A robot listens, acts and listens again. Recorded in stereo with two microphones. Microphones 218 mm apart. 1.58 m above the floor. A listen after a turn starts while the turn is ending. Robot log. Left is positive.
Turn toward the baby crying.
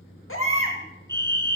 note: The baby crying: about 70° left or 110° left.
cmd yaw +70
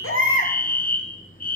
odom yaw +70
note: So it is at 35° left.
cmd yaw +35
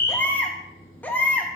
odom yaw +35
note: The baby crying is now 10° left.
cmd yaw +10
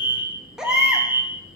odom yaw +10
end: Facing the baby crying, 1 to 2 m away.